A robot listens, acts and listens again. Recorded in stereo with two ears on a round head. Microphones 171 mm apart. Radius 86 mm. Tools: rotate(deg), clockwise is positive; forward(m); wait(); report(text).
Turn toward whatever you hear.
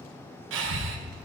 rotate(90)
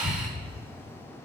report("Facing the breathing.")